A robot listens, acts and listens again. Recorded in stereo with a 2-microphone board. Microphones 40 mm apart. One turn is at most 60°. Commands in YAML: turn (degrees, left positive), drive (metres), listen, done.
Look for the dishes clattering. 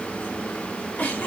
listen: true
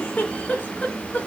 listen: true
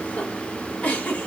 done: "I can't make out dishes clattering, only a giggle."